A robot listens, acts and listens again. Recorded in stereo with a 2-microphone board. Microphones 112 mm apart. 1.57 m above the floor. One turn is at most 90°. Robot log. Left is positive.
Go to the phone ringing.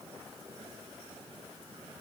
cmd idle
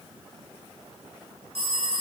note: The phone ringing: about 55° right or 125° right.
cmd yaw -55
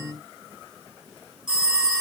note: So it is at 10° right.
cmd yaw -10
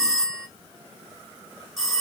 cmd fwd 1.0
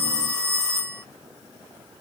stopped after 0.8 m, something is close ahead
end: I am next to the phone ringing.